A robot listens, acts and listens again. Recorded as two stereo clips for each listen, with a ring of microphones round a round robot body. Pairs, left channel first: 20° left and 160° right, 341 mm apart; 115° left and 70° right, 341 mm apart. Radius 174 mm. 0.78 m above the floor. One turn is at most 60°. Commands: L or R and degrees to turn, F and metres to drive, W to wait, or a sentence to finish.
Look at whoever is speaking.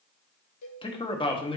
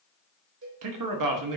R50
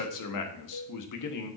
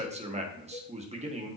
Found it: a man speaking, straight ahead.